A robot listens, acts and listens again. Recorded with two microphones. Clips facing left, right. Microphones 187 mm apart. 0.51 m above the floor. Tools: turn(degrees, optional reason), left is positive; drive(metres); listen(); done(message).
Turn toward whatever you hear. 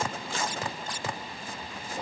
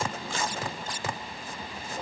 listen()
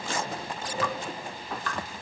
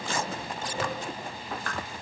turn(degrees=-50, reason="The dripping: about 50° right or 130° right.")
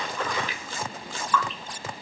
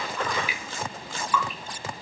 turn(degrees=-10, reason="So it is at 10° right.")
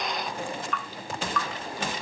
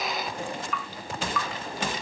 done("Facing the dripping, 1 to 2 m away.")